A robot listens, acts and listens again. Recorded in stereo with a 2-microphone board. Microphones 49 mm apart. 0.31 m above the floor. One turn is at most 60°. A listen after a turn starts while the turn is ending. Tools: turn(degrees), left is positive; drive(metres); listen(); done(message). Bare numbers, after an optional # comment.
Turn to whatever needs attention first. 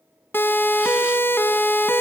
# The siren: about 55° left or 125° left.
turn(55)
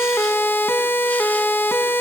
# So it is at 65° left.
turn(60)
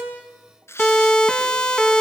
# The siren is now 15° left.
turn(15)
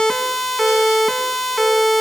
done("Facing the siren, 2 to 4 m away.")